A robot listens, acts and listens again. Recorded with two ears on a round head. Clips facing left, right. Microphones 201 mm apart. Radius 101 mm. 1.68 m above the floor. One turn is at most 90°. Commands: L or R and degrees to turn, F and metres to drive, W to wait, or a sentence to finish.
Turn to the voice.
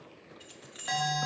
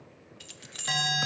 W
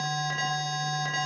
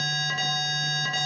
W
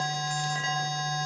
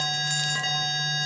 I can't make out anyone speaking to turn to.